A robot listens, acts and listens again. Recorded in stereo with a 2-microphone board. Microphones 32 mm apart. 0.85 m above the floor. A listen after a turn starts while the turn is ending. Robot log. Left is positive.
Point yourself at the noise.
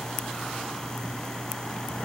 cmd idle
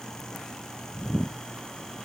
cmd idle
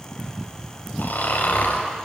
cmd yaw +90
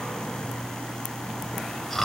end: Facing the snoring, over 4 m away.